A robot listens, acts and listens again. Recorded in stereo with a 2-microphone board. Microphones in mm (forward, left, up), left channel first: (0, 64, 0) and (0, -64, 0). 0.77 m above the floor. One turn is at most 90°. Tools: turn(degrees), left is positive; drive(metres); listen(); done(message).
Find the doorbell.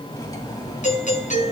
turn(degrees=90)
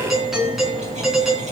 done("Facing the doorbell.")